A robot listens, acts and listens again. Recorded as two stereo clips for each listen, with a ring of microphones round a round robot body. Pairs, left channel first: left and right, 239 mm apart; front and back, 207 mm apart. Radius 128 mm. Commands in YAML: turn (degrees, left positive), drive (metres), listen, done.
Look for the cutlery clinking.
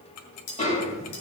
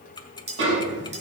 turn: 120
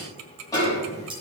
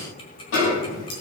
listen: true
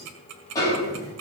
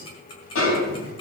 listen: true
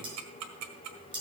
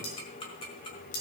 turn: -20
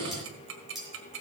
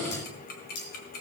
done: "Facing the cutlery clinking."